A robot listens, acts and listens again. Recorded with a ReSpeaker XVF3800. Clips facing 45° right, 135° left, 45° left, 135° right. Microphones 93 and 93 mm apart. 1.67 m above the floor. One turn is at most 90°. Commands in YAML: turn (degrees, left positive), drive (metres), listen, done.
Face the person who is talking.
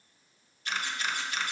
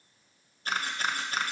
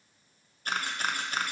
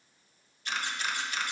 listen: true
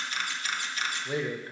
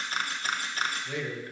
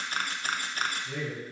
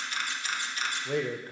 turn: -90
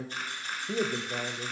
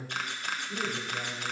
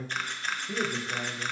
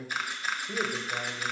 turn: -50
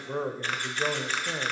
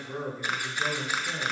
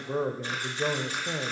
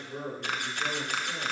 turn: 20
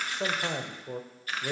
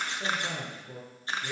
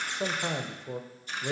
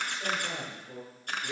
done: "Found it: a man speaking, straight ahead, under 1 m away."